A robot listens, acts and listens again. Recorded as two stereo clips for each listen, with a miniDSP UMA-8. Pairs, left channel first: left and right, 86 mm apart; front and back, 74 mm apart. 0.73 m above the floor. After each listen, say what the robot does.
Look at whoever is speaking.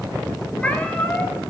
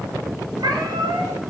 Keep listening.
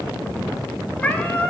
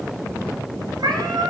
Keep listening.
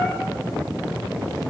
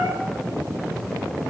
I can't make out anyone speaking to turn to.